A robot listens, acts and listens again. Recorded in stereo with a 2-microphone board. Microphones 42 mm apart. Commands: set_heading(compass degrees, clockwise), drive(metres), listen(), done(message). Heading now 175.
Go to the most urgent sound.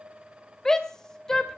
set_heading(160)
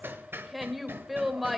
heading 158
drive(1.0)
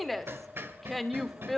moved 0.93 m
drive(1.0)
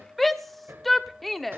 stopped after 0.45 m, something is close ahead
done("Arrived at the shout, straight ahead.")